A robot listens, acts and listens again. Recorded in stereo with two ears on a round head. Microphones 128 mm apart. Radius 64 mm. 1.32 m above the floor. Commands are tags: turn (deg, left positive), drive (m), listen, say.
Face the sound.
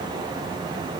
<listen/>
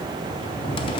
<turn deg="35"/>
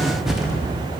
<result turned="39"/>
<say>Facing the cupboard door.</say>